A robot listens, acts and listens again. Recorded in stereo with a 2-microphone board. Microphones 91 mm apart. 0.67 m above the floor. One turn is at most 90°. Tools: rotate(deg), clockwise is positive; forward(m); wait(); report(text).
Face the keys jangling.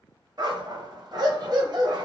wait()
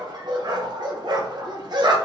wait()
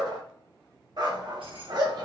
rotate(70)
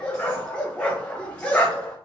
wait()
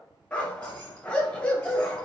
rotate(-15)
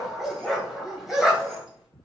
report("Facing the keys jangling, 1 to 2 m away.")